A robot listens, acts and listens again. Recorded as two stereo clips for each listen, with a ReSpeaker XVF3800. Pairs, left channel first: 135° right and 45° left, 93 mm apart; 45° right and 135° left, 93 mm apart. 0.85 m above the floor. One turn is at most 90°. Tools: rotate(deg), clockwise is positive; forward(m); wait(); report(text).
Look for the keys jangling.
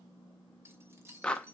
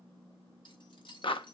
rotate(15)
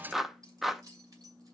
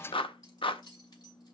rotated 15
report("Found it: keys jangling, straight ahead.")